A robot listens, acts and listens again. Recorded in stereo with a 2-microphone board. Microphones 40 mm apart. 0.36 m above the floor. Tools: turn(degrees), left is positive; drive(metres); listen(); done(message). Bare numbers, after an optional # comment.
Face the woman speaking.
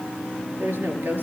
# The woman speaking: about 60° right or 120° right.
turn(-60)
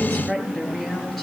done("Facing the woman speaking, over 4 m away.")